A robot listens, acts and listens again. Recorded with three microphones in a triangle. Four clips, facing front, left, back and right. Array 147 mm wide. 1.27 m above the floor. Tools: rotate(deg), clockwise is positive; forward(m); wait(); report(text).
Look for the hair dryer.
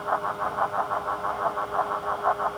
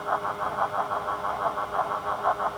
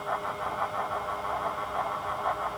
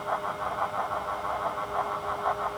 wait()
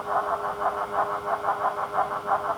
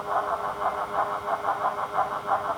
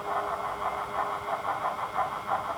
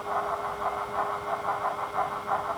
wait()
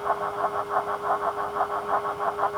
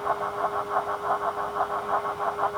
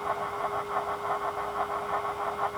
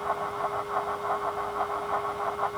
report("I can't make out a hair dryer.")